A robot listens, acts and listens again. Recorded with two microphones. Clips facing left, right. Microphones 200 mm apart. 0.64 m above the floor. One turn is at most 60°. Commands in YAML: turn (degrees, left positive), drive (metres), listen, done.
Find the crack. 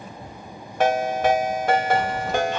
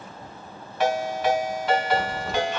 turn: 30
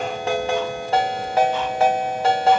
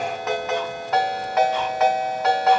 listen: true
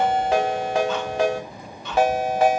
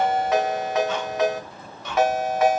done: "I heard a crack, but can't make it out now. It was about 30° right or 150° left."